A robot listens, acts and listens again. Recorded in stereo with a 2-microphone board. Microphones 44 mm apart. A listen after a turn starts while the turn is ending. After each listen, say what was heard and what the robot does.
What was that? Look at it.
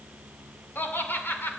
The laughter: about 60° left or 120° left. Turn 60° left.
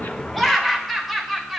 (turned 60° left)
Facing the laughter.